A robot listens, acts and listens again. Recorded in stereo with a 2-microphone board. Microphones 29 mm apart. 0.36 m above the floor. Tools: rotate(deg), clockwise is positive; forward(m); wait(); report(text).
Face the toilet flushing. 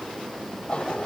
rotate(-40)
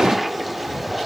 report("Found it: a toilet flushing, straight ahead.")